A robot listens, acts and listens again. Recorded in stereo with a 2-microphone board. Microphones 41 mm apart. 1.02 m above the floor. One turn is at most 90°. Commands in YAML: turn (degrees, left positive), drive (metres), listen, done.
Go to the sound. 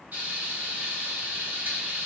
turn: -45
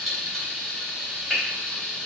drive: 1.0
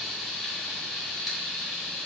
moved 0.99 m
drive: 1.0
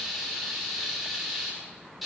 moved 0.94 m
drive: 1.0
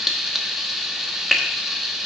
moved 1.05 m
drive: 1.0
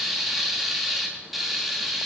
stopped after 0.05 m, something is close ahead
done: "I am next to the frying."